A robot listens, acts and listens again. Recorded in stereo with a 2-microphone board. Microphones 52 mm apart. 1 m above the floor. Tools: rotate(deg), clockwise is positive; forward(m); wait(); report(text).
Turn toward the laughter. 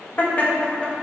rotate(-25)
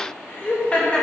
rotate(-25)
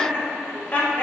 rotate(-30)
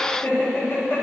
rotate(-130)
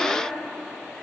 wait()
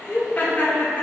rotate(-35)
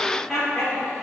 report("Found it: laughter, straight ahead, 2 to 4 m away.")